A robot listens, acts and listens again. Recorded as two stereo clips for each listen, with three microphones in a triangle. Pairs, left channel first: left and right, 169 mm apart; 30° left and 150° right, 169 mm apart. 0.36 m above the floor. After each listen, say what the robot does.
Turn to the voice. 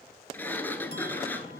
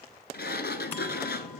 Keep listening.
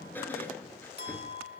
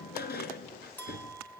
Keep listening.
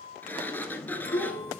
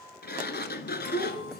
Turn 45° left.
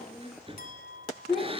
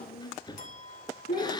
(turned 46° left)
Found it: a child speaking, straight ahead, 2 to 4 m away.